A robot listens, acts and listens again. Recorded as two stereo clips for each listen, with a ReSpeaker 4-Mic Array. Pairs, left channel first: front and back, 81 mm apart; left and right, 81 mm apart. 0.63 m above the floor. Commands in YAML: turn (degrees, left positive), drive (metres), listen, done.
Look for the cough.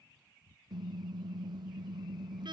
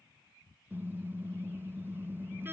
listen: true
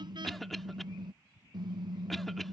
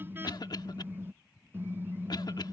turn: 85
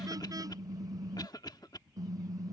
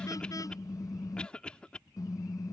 turn: 15
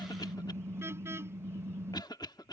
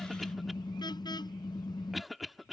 done: "Facing the cough."